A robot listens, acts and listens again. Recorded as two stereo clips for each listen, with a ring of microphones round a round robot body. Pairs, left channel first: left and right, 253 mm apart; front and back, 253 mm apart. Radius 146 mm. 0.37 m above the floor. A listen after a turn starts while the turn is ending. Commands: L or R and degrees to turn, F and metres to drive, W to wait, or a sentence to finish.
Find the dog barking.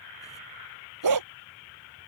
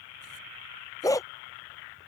R75
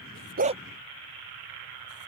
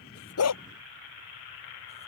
R20
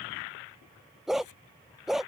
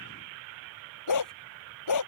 Facing the dog barking.